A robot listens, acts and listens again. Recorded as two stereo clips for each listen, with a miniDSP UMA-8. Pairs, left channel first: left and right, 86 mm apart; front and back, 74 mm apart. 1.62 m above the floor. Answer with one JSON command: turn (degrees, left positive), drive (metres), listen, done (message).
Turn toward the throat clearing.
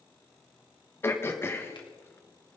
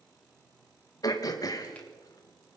{"turn": 30}
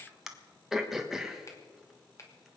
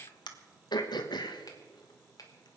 {"done": "Facing the throat clearing."}